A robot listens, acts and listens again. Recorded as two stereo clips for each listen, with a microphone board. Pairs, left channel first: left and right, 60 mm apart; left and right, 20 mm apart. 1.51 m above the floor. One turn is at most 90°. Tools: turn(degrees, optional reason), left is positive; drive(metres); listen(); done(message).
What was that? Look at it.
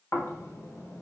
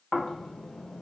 turn(degrees=50, reason="The snoring: about 50° left or 130° left.")
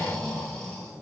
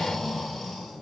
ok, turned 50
done("Found it: snoring, straight ahead, 1 to 2 m away.")